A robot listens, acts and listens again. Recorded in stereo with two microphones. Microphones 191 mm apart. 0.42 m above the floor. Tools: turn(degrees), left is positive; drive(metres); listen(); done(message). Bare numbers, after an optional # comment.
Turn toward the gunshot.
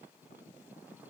listen()
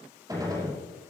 # The gunshot: about 20° right or 160° right.
turn(-20)
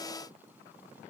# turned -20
listen()
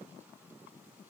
done("I heard a gunshot, but can't make it out now. It was about straight ahead or 140° right.")